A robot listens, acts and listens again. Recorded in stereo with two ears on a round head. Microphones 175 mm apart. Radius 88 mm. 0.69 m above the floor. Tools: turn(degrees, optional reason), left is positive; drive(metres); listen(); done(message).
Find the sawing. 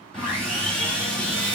turn(degrees=30)
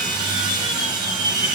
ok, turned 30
turn(degrees=-25, reason="So it is at 25° right.")
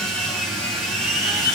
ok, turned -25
done("Found it: sawing, straight ahead, 1 to 2 m away.")